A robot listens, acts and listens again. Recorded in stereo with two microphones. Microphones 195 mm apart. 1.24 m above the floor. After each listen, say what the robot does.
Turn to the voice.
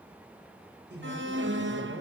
Turn 55° right.
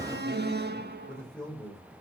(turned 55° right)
Found it: a man speaking, straight ahead.